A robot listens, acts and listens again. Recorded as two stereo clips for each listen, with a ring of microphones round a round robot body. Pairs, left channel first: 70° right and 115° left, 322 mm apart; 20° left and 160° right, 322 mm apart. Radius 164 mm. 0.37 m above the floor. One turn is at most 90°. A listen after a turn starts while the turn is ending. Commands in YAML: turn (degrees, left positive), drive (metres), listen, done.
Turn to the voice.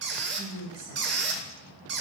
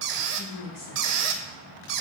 turn: 70
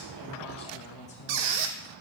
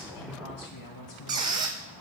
done: "Facing the woman speaking, 2 to 4 m away."